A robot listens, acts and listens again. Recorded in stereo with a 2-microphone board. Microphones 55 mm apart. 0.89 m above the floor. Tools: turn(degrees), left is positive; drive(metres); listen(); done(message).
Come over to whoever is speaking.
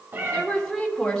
turn(degrees=30)
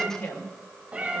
turn(degrees=140)
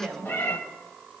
drive(metres=1.0)
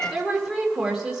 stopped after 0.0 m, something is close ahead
done("Blocked. The woman speaking is further on, straight ahead.")